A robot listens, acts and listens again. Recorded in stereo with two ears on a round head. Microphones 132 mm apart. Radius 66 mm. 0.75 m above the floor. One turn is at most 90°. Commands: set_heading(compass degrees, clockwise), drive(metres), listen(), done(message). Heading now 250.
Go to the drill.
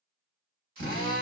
set_heading(305)
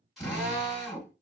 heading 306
drive(1.0)
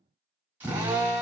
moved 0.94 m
set_heading(321)
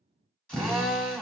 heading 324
drive(1.0)
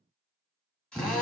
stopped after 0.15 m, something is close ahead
done("Arrived at the drill, straight ahead.")